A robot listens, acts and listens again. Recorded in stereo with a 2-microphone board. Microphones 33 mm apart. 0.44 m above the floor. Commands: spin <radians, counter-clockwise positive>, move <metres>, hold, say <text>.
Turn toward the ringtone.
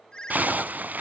spin 0.44
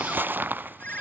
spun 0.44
spin 2.27
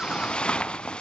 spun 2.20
hold
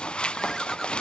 hold
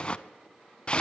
say I heard a ringtone from this way, but can't make it out now.